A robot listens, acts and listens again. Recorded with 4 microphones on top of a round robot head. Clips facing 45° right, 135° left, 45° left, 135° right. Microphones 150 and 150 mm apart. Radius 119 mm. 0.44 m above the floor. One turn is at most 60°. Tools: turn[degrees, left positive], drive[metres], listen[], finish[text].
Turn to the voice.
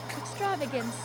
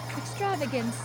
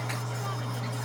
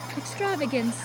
Thought: The woman speaking: 140° right.
Action: turn[-60]
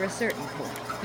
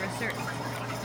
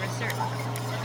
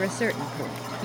Thought: The woman speaking is now 95° right.
Action: turn[-60]
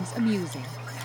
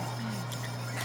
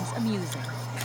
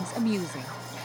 Thought: The woman speaking is now 55° right.
Action: turn[-55]
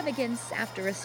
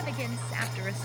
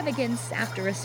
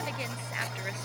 Action: finish[Facing the woman speaking.]